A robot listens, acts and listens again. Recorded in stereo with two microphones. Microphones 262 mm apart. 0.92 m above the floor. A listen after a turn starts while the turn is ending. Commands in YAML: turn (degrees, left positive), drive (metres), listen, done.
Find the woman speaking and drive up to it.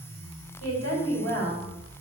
turn: 70
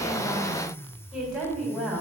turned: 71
drive: 1.0
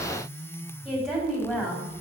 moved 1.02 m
drive: 1.0
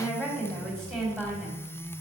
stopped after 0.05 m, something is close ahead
done: "Blocked. The woman speaking is further on, straight ahead."